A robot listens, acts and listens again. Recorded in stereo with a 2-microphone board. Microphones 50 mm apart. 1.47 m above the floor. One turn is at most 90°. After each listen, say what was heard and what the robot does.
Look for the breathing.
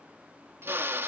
Keep listening.
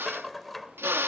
Keep listening.
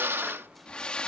The breathing: about 20° left or 160° left. Turn 20° left.
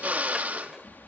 So it is at 140° left. Turn 90° left.
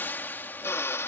The breathing is now 45° left. Turn 45° left.
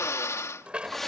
Facing the breathing.